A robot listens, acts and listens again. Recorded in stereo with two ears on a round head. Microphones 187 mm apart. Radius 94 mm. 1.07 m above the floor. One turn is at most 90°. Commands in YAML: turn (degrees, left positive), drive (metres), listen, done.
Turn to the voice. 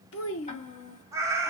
turn: 90
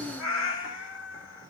done: "Facing the child speaking, 1 to 2 m away."